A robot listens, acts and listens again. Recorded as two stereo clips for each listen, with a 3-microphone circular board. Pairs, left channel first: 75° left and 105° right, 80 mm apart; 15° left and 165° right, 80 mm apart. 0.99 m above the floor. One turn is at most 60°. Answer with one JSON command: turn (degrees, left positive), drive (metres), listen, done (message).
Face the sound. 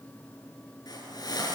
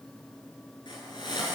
{"turn": 40}
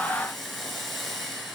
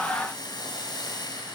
{"turn": -15}
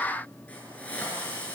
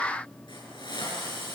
{"done": "Facing the hiss."}